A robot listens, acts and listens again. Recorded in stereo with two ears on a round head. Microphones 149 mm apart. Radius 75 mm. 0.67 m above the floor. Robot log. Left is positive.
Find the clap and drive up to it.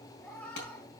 cmd yaw +90
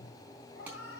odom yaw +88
note: So it is at 10° right.
cmd yaw -10
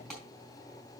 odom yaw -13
cmd fwd 1.0
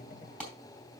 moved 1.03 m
cmd fwd 1.0
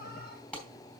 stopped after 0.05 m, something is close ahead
end: Blocked. The clap is further on, straight ahead.